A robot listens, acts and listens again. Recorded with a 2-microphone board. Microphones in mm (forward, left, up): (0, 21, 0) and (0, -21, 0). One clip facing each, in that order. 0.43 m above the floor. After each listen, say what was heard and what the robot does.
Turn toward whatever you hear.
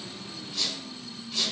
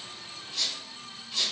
Turn 30° left.
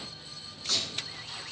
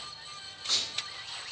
So it is at 30° right. Turn 30° right.
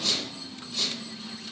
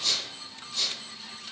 The squeak is now 10° left. Turn 10° left.
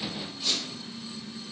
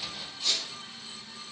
Found it: a squeak, straight ahead, under 1 m away.